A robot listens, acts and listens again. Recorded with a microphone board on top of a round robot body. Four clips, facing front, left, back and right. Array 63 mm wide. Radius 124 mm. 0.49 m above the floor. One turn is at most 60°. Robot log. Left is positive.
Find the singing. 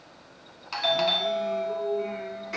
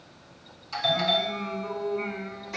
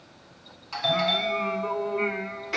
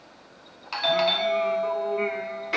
note: The singing: 140° right.
cmd yaw -60
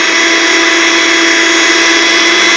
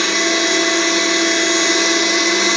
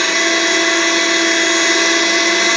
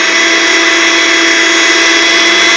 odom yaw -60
note: Nothing new. It was at 80° right.
cmd yaw -60
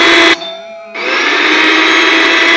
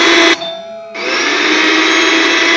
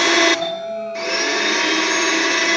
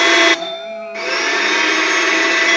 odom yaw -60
note: Nothing new. It was at 20° right.
cmd yaw -20
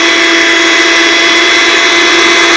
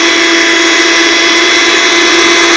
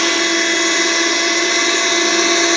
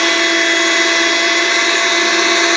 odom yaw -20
end: I heard singing from this way, but can't make it out now.